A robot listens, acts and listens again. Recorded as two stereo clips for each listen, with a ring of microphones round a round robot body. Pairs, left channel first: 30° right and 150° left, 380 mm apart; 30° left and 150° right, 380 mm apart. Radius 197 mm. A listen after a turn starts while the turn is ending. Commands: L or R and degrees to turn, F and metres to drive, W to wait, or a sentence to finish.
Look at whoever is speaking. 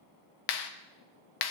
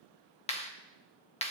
W
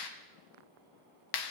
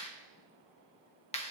W
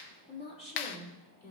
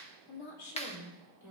L35
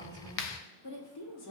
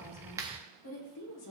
R10
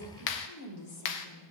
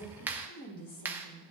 R10
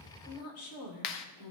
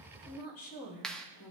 Found it: a woman speaking, straight ahead, 2 to 4 m away.